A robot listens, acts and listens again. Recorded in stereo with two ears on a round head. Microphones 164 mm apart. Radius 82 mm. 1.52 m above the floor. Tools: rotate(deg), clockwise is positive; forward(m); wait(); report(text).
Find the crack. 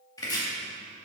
wait()
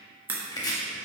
rotate(30)
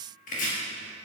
wait()
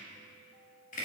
report("I heard a crack, but can't make it out now. It was about 20° left or 140° right.")